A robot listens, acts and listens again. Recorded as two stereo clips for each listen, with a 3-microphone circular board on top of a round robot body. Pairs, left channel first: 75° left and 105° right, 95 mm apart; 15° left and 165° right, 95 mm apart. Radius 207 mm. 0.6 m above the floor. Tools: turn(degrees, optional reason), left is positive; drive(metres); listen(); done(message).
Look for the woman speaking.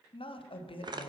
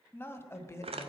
turn(degrees=75, reason="The woman speaking: 75° left.")
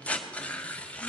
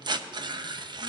listen()
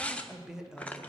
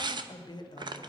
turn(degrees=-25, reason="The woman speaking is now 25° right.")
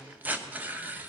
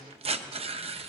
listen()
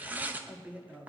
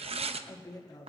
turn(degrees=-35, reason="The woman speaking is now 35° right.")
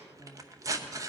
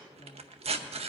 turn(degrees=-20, reason="The woman speaking is now 20° right.")
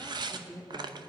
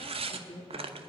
turn(degrees=-15, reason="The woman speaking is now 15° right.")
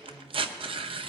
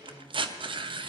listen()
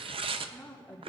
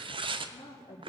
done("Facing the woman speaking, 1 to 2 m away.")